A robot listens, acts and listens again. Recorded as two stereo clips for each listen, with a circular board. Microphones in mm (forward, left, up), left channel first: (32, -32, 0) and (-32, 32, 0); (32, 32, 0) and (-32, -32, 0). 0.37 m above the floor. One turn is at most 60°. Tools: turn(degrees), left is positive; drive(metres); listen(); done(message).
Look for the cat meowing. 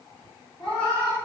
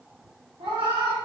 turn(degrees=-60)
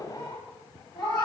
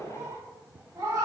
turn(degrees=-60)
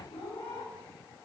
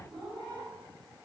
turn(degrees=-35)
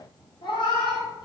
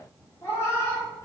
turn(degrees=-15)
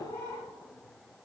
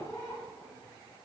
done("Facing the cat meowing, 1 to 2 m away.")